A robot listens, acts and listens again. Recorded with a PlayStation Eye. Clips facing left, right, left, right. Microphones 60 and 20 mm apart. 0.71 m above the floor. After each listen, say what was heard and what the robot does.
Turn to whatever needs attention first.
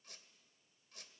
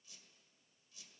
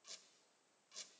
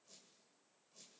Keep listening.
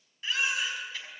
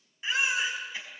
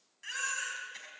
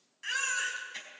The baby crying: about 20° right or 160° right. Turn 20° right.
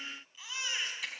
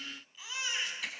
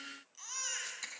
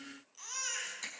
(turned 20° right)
Facing the baby crying.